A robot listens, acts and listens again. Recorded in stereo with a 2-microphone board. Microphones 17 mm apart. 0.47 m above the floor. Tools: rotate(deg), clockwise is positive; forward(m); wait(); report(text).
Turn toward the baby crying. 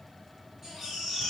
rotate(25)
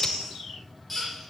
report("Found it: a baby crying, straight ahead.")